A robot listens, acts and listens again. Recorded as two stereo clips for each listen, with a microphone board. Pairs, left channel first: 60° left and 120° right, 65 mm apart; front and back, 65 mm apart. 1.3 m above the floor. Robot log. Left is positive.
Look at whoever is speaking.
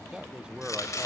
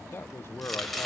note: The man speaking: 45° right.
cmd yaw -45
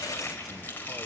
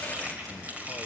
cmd idle
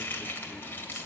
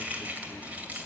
cmd idle
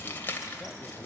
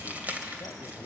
end: I heard a man speaking from this way, but can't make it out now.